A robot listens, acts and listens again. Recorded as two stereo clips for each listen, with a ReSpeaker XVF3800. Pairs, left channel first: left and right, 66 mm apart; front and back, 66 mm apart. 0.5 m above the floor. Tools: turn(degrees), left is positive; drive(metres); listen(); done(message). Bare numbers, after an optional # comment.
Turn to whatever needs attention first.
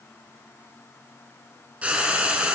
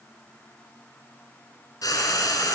listen()
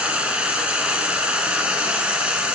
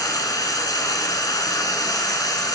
listen()
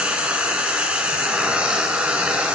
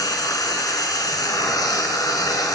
done("I can't make out anything urgent to turn to.")